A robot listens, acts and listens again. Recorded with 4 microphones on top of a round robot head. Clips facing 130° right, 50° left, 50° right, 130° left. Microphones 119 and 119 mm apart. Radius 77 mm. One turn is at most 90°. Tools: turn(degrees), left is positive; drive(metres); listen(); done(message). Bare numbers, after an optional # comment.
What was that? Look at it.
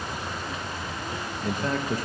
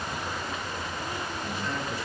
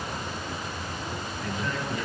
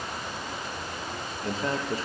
# The man speaking: 175° right.
turn(-90)
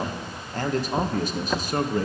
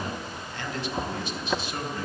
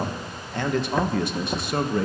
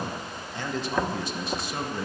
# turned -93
# The man speaking is now 80° right.
turn(-80)
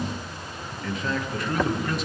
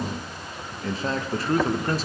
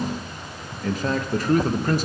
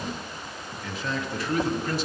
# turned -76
done("Found it: a man speaking, straight ahead, 1 to 2 m away.")